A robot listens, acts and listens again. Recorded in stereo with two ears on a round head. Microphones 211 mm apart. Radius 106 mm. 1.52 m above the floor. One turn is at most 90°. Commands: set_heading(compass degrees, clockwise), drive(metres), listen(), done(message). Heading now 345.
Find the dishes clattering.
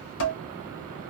set_heading(295)
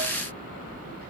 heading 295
listen()
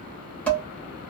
done("Found it: dishes clattering, straight ahead.")